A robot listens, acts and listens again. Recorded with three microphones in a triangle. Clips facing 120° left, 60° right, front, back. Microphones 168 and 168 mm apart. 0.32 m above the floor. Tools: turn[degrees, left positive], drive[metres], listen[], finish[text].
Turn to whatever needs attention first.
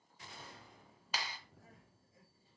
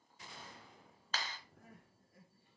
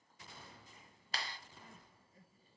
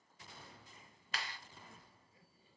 Thought: The crying: 40° right.
Action: turn[-40]
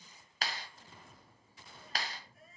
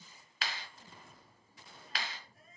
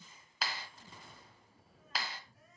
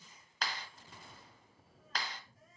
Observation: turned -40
Action: finish[Facing the crying.]